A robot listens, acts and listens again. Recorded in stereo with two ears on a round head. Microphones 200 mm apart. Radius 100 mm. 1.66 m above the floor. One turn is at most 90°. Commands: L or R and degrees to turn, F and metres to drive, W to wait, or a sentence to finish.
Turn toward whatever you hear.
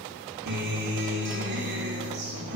R50
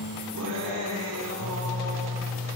R80
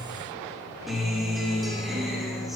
Facing the guitar.